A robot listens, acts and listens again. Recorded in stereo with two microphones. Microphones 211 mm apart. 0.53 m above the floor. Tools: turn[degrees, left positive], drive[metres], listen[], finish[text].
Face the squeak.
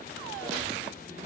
Action: turn[-90]
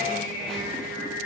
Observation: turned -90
Action: finish[Found it: a squeak, straight ahead.]